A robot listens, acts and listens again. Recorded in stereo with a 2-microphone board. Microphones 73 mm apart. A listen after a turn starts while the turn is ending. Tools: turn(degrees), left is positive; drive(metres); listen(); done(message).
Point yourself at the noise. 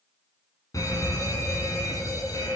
turn(degrees=55)
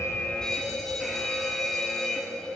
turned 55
done("Facing the fire alarm, over 4 m away.")